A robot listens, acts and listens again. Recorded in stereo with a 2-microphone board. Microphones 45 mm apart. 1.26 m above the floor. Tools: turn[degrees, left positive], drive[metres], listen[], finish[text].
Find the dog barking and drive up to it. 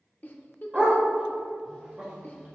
Thought: The dog barking: about 25° right or 155° right.
Action: turn[-25]
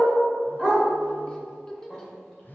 Action: drive[1.0]
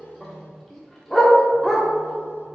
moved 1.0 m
Action: drive[1.0]
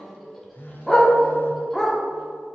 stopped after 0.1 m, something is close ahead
Action: finish[I am next to the dog barking.]